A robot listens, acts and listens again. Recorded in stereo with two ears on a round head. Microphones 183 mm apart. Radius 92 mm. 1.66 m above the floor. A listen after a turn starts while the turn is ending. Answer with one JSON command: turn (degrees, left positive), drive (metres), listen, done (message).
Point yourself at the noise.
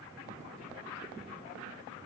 {"listen": true}
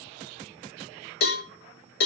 {"turn": 55}
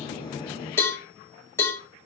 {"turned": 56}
{"turn": 15}
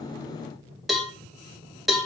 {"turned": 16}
{"done": "Found it: a cowbell, straight ahead."}